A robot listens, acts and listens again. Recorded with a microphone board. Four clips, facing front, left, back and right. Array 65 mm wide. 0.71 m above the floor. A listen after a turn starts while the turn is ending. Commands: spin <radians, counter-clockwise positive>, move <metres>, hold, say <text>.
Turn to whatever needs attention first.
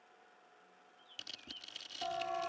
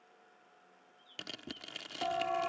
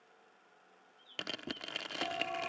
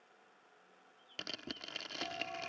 spin 1.48
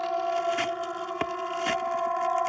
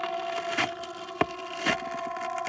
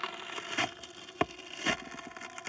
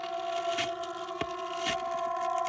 spin -0.17
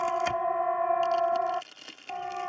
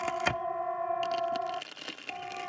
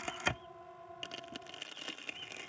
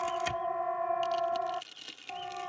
say Found it: a siren, straight ahead.